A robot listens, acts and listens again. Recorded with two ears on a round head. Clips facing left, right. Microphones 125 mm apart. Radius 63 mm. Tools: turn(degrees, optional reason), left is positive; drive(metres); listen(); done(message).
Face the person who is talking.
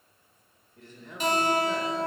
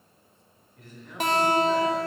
turn(degrees=25, reason="The man speaking: about 25° left or 155° left.")
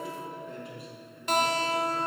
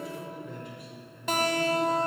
done("Facing the man speaking, 1 to 2 m away.")